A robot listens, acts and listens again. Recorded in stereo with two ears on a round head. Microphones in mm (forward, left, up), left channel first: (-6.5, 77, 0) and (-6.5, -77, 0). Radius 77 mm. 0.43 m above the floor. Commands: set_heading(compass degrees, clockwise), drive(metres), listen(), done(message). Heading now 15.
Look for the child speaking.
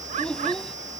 set_heading(345)
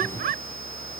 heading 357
listen()
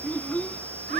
set_heading(327)
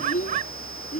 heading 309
set_heading(174)
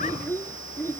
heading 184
set_heading(169)
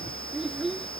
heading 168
done("Facing the child speaking.")